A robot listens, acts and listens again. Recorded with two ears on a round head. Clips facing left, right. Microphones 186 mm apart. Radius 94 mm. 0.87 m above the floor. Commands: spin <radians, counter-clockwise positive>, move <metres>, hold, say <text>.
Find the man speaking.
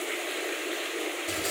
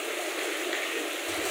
hold
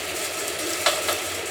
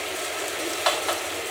hold
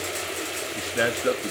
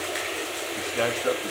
spin 0.35
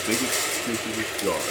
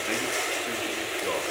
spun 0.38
spin 2.18
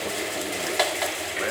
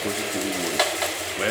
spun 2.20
hold
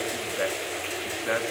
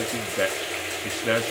spin -0.79
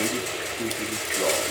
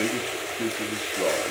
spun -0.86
say Facing the man speaking, 1 to 2 m away.